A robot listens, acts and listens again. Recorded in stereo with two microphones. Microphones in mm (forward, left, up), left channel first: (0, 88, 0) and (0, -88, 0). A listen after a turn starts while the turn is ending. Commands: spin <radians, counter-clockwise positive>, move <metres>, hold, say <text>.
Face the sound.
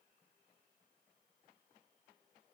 hold
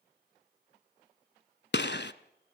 spin 1.57
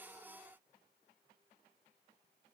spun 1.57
say I heard a gunshot from this way, but can't make it out now.